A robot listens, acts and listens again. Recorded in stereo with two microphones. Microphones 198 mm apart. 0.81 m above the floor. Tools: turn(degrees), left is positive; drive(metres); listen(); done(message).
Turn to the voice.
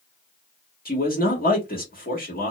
turn(degrees=50)
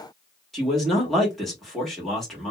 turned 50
done("Facing the man speaking, 1 to 2 m away.")